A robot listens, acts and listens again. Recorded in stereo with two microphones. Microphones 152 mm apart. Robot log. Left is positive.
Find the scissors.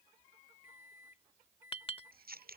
cmd yaw -90
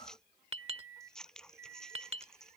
end: Facing the scissors.